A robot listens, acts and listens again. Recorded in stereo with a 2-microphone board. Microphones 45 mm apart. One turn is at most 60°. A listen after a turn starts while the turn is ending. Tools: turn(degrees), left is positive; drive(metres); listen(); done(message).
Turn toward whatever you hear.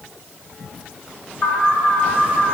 turn(degrees=60)
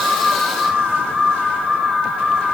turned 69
done("Found it: an alarm, straight ahead.")